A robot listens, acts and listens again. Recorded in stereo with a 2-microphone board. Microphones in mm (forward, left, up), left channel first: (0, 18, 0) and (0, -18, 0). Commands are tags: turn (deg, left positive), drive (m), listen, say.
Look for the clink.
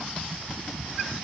<listen/>
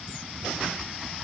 <listen/>
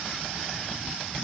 <say>I can't make out a clink to turn to.</say>